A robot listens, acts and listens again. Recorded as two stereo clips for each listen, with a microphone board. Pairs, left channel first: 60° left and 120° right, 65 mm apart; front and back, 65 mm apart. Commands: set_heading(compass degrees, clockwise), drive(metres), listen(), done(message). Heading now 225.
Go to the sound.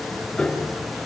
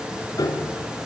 set_heading(245)
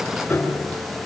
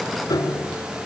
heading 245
drive(1.0)
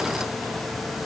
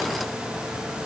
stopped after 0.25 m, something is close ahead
listen()
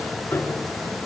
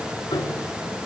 done("Blocked. The piano is further on, straight ahead.")